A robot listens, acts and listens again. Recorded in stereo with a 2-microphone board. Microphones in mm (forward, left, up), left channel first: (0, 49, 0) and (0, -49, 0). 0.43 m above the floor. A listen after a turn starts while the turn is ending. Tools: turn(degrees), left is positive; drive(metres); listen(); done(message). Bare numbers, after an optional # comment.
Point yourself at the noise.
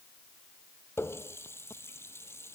# The running tap: about 25° left or 155° left.
turn(25)
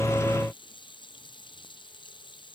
# So it is at 130° left.
turn(130)
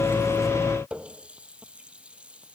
# The running tap is now 10° right.
turn(-10)
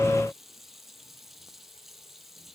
done("Facing the running tap.")